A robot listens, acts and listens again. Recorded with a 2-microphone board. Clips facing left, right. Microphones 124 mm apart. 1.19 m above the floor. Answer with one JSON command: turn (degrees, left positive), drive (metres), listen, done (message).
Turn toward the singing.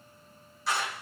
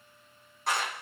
{"listen": true}
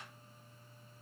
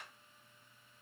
{"listen": true}
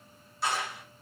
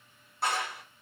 {"done": "I can't make out singing, only a clap."}